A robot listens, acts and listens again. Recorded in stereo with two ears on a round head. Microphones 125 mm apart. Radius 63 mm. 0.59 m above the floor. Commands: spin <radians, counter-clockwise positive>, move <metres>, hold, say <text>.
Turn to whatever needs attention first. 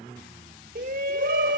spin -1.05
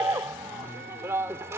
spin -0.35
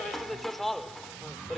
say Found it: a shout, straight ahead.